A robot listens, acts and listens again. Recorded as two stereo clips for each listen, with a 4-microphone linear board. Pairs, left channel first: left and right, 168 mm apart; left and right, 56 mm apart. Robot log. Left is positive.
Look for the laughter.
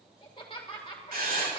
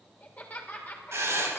note: The laughter: about 30° left or 150° left.
cmd yaw +30
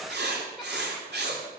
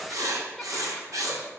cmd idle
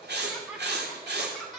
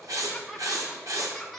end: Found it: laughter, straight ahead, 2 to 4 m away.